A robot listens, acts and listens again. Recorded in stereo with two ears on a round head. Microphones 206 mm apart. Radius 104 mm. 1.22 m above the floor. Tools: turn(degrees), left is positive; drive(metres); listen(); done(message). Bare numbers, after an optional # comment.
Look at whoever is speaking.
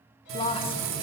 # The woman speaking: about 25° left or 155° left.
turn(25)
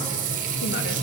listen()
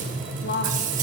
# So it is at 130° left.
turn(130)
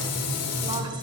listen()
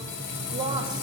# The woman speaking is now 20° right.
turn(-20)
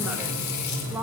done("Facing the woman speaking, 1 to 2 m away.")